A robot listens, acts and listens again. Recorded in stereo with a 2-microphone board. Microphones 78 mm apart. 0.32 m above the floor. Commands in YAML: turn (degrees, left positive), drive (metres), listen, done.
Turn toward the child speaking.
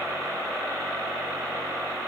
listen: true
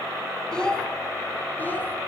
turn: 30
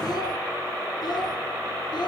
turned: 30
listen: true
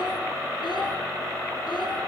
turn: 105
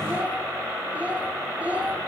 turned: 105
turn: -20
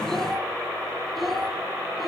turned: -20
done: "Facing the child speaking, 2 to 4 m away."